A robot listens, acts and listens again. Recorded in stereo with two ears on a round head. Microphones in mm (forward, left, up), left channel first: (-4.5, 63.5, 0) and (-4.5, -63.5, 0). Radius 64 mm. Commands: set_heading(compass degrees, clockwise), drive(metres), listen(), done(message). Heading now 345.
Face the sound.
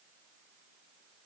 listen()
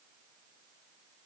listen()
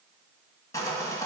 set_heading(320)
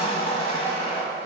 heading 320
set_heading(190)
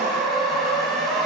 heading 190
done("Found it: sawing, straight ahead.")